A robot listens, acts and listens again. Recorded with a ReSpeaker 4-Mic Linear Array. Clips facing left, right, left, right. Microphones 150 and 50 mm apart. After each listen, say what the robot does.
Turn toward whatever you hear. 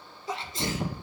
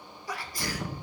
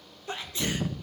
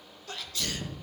Turn 25° left.
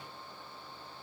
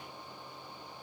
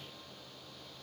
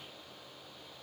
Keep listening.
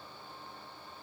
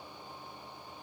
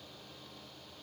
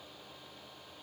I heard a sneeze, but can't make it out now. It was about straight ahead or 130° left.